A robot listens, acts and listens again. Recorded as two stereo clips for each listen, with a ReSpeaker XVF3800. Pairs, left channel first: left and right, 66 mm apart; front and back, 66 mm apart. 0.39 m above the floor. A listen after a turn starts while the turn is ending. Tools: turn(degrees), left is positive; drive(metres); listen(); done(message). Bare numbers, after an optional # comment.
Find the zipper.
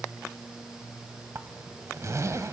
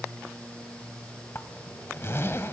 # The zipper: 50° right.
turn(-50)
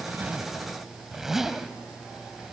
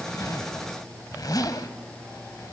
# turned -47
done("Found it: a zipper, straight ahead.")